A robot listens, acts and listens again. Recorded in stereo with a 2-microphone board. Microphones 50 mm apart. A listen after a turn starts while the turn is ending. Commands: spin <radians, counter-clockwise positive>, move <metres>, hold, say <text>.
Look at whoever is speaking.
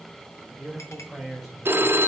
spin 0.52
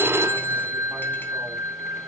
hold
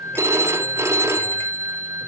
hold
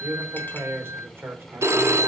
spin -0.96
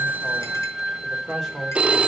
spin -0.17
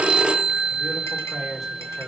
say Found it: a man speaking, straight ahead.